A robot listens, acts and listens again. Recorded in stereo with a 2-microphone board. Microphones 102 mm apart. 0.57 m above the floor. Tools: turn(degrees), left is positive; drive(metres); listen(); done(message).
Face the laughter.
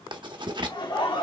turn(degrees=55)
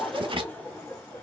turn(degrees=25)
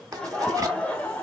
turn(degrees=15)
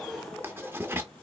turn(degrees=10)
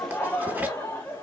turn(degrees=20)
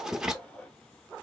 turn(degrees=10)
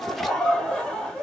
done("Found it: laughter, straight ahead.")